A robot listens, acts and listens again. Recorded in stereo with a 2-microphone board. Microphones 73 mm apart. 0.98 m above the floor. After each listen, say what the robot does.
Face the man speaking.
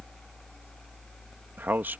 Turn 30° right.
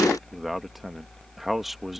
Found it: a man speaking, straight ahead.